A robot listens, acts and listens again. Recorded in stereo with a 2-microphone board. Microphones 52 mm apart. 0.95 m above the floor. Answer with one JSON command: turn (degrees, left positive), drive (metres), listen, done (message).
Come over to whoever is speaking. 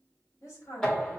{"turn": 55}
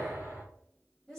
{"drive": 1.0}
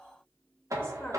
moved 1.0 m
{"turn": 15}
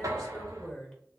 {"drive": 1.0}
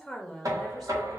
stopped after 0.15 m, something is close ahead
{"done": "Arrived at the woman speaking, straight ahead."}